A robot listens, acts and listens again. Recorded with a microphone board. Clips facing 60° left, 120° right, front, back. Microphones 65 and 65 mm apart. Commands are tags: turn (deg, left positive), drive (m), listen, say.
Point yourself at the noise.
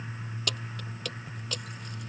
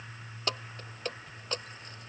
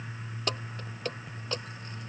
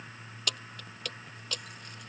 <turn deg="-60"/>
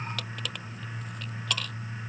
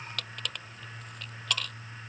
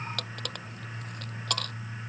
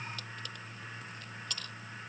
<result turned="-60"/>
<turn deg="-30"/>
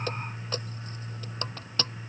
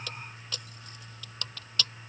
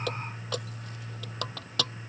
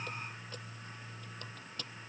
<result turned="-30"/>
<say>Facing the keys jangling.</say>